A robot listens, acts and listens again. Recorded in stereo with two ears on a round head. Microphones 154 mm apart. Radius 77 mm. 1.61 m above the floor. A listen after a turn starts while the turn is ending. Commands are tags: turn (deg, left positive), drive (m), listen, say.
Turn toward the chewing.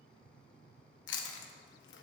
<turn deg="90"/>
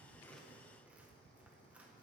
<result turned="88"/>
<listen/>
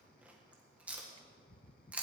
<turn deg="-10"/>
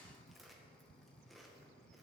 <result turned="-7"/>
<listen/>
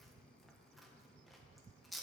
<say>Facing the chewing.</say>